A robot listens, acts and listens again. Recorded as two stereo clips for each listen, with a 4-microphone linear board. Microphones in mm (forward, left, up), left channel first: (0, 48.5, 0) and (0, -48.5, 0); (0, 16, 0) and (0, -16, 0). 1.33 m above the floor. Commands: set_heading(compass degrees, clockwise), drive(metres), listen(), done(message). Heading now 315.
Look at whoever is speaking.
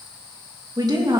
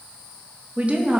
set_heading(355)
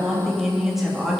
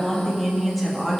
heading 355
done("Found it: a woman speaking, straight ahead.")